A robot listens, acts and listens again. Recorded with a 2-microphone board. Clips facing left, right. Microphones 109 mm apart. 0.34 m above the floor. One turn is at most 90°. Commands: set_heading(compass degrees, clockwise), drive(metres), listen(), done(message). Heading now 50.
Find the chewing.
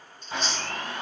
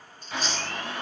set_heading(80)
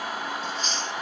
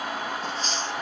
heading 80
set_heading(170)
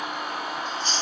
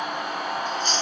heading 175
set_heading(225)
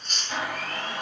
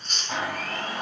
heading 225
done("Facing the chewing, 1 to 2 m away.")